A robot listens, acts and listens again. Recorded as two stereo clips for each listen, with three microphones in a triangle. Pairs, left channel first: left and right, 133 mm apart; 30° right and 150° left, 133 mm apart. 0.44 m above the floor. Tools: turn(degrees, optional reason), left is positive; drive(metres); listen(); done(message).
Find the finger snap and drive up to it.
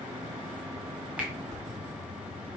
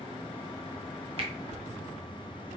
turn(degrees=-170, reason="The finger snap: 170° right.")
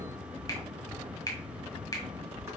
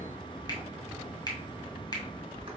turn(degrees=30, reason="The finger snap is now 30° left.")
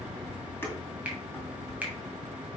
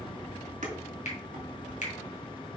turn(degrees=-10, reason="The finger snap is now 10° right.")
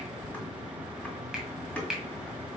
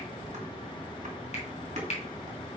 drive(metres=1.0)
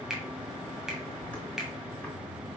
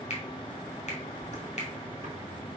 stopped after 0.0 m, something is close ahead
done("Blocked. The finger snap is further on, straight ahead.")